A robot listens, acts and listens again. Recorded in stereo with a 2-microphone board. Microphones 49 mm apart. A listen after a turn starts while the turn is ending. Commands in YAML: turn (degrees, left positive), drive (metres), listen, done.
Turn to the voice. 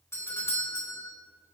listen: true
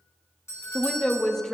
turn: 30
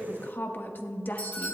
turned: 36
turn: 135
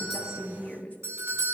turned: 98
turn: 35
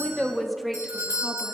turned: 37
done: "Found it: a woman speaking, straight ahead."